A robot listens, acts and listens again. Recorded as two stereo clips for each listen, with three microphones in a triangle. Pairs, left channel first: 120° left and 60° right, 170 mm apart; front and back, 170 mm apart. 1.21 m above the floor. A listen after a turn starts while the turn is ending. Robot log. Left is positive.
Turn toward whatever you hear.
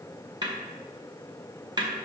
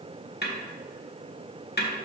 end: Found it: a snare drum, straight ahead, 1 to 2 m away.